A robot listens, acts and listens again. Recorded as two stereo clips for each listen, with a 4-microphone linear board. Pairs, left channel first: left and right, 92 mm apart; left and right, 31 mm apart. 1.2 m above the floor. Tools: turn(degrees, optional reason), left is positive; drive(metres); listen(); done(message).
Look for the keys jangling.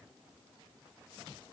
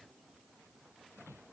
listen()
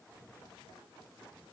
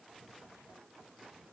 listen()
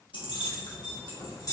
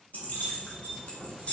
turn(degrees=40, reason="The keys jangling: about 40° left or 140° left.")
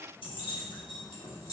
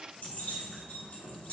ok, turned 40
turn(degrees=130, reason="So it is at 130° left.")
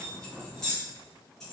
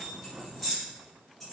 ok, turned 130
done("Facing the keys jangling.")